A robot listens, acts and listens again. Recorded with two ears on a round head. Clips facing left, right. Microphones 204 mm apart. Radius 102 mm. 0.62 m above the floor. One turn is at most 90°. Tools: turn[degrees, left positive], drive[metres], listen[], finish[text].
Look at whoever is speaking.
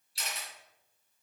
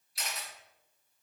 Action: listen[]
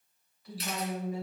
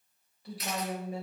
Thought: The woman speaking: about 25° right or 155° right.
Action: turn[-25]
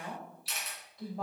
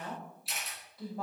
Action: finish[Facing the woman speaking, 2 to 4 m away.]